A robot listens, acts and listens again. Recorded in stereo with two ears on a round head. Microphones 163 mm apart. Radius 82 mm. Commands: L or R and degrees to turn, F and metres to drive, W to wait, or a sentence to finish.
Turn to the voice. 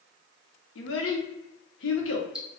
L90
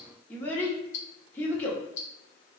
L10
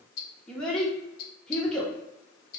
Facing the child speaking.